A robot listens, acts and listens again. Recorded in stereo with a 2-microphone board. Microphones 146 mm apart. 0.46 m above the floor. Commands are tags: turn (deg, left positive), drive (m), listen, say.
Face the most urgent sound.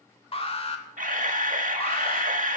<turn deg="40"/>
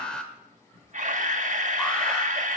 <say>Facing the alarm.</say>